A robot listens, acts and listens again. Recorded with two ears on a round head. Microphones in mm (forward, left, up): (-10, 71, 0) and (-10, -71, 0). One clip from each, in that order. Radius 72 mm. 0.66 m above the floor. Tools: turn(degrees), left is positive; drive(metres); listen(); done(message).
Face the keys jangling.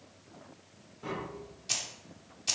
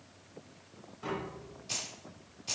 turn(degrees=55)
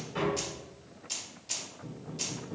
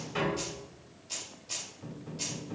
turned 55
turn(degrees=20)
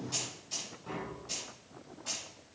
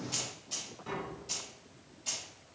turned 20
turn(degrees=-15)
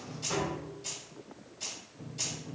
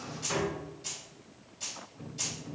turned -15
done("Facing the keys jangling, 2 to 4 m away.")